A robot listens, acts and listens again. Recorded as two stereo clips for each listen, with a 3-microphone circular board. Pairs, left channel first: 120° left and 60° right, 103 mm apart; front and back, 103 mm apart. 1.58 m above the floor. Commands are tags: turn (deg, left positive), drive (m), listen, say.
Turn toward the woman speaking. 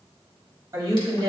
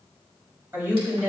<turn deg="-110"/>
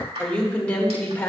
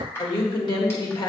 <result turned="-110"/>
<turn deg="50"/>
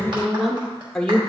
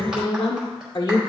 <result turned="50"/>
<turn deg="40"/>
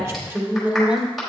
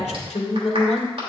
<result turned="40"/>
<turn deg="20"/>
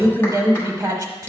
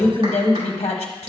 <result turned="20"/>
<say>Facing the woman speaking, 1 to 2 m away.</say>